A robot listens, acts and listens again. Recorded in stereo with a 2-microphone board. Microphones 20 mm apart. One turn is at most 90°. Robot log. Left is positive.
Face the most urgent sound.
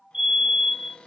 note: The fire alarm: about 55° right or 125° right.
cmd yaw -55
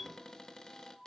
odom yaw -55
cmd idle
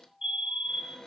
note: So it is at 55° right.
cmd yaw -55
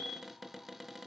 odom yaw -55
note: The fire alarm is now 10° right.
cmd yaw -10
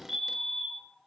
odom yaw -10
end: Facing the fire alarm, 2 to 4 m away.